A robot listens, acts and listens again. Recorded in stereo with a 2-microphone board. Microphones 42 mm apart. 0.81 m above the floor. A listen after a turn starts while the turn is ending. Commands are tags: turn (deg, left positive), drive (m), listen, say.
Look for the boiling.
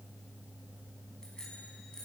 <listen/>
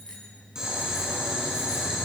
<turn deg="-20"/>
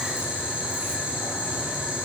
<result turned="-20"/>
<turn deg="-140"/>
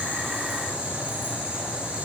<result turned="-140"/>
<turn deg="-40"/>
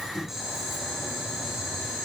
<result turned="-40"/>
<turn deg="-10"/>
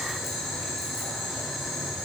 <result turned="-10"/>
<say>Found it: boiling, straight ahead.</say>